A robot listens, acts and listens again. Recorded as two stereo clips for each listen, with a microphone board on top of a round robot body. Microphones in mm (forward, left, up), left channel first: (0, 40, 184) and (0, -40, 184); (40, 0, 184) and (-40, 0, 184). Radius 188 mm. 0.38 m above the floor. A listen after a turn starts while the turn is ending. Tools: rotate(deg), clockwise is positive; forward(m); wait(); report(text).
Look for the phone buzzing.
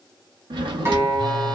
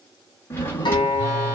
rotate(120)
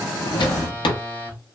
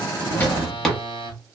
rotate(-25)
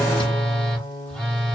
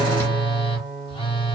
rotate(-10)
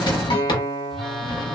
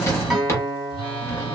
report("Facing the phone buzzing, 1 to 2 m away.")